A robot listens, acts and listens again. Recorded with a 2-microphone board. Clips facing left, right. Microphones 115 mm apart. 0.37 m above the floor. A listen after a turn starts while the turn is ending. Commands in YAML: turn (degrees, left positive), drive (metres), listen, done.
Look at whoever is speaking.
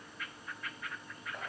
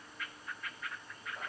listen: true
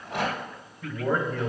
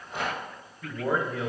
turn: -30
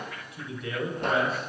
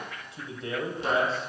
turn: -145
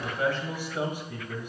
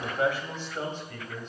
turn: 15
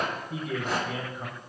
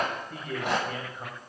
done: "Found it: a man speaking, straight ahead."